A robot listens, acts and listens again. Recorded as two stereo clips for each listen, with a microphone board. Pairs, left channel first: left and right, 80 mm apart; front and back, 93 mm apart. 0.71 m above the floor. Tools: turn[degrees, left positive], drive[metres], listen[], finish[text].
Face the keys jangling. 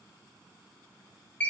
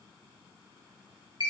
Action: listen[]
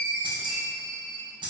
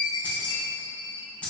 Thought: The keys jangling: 75° right.
Action: turn[-75]
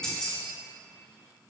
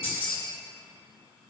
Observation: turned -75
Thought: The keys jangling is now 10° left.
Action: turn[10]
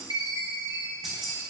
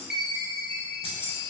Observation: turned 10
Action: finish[Facing the keys jangling, under 1 m away.]